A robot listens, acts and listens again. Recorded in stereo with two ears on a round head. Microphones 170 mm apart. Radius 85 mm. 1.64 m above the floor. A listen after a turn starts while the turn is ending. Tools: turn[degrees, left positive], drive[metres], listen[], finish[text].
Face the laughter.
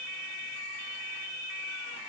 Action: listen[]
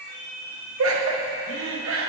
Action: turn[-90]
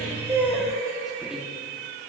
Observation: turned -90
Action: finish[Found it: laughter, straight ahead, 1 to 2 m away.]